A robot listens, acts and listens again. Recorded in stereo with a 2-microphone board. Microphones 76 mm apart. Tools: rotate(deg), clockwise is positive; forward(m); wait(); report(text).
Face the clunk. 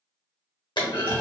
rotate(-70)
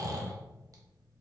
wait()
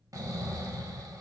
report("I heard a clunk, but can't make it out now. It was about straight ahead or 40° left.")